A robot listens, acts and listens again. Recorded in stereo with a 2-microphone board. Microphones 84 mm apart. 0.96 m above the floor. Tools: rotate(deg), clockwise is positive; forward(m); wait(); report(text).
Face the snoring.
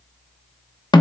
wait()
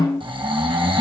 rotate(90)
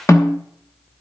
wait()
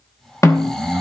report("Found it: snoring, straight ahead.")